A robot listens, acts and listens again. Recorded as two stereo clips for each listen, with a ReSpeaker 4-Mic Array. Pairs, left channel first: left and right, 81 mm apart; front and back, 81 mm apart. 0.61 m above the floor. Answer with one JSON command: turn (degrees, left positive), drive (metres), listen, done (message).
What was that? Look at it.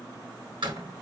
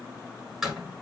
{"turn": -95}
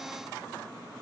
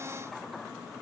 {"done": "Facing where the door slam came from. I can't hear it now."}